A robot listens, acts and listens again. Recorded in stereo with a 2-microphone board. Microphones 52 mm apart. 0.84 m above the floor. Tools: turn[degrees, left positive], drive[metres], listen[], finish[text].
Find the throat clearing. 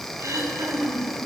Action: turn[-90]
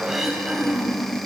Thought: So it is at 10° right.
Action: turn[-10]
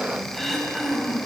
Action: finish[Facing the throat clearing.]